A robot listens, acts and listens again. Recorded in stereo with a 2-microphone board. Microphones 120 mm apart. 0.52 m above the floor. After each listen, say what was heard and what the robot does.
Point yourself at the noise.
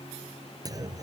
The clunk: about 30° right or 150° right. Turn 30° right.
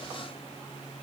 Keep listening.
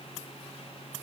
I heard a clunk, but can't make it out now. It was about straight ahead or 120° right.